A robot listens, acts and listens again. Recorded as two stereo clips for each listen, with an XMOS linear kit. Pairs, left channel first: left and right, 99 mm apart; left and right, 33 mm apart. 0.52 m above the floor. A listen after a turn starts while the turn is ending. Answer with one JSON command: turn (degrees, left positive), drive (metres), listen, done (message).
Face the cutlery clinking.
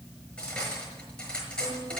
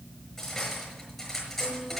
{"turn": 30}
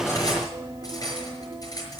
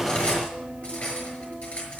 {"turn": 140}
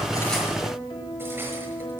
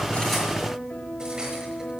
{"listen": true}
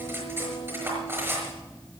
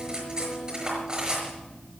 {"turn": -25}
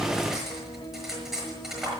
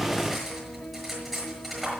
{"done": "Facing the cutlery clinking, over 4 m away."}